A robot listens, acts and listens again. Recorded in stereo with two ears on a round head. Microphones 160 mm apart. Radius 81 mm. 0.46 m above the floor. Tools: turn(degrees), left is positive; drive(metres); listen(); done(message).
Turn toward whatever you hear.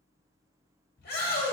turn(degrees=55)
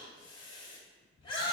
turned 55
turn(degrees=35)
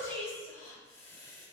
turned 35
turn(degrees=15)
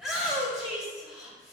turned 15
done("Found it: a shout, straight ahead, 1 to 2 m away.")